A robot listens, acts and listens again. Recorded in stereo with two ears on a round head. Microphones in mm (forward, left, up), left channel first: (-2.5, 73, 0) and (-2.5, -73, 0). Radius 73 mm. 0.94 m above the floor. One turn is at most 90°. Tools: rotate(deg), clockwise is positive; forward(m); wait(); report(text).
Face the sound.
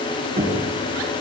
rotate(35)
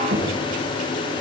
rotate(90)
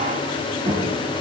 rotate(35)
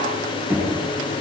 rotate(15)
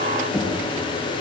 report("Facing the knocking, over 4 m away.")